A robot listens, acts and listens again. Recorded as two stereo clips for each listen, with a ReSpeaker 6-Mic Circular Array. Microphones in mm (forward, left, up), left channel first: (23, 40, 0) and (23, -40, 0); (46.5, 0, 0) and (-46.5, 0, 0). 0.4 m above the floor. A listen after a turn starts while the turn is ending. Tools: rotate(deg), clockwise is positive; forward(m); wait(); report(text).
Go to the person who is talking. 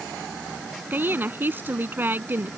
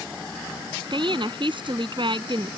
rotate(155)
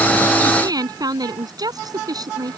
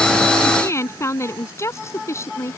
rotate(60)
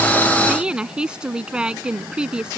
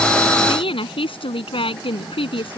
rotate(10)
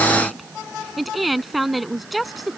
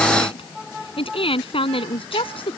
forward(1.0)
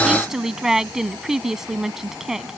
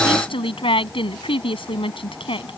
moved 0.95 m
forward(1.0)
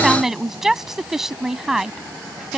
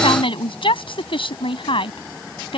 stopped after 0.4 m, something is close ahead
report("Something is in my way. I am facing the woman speaking but have not reached it.")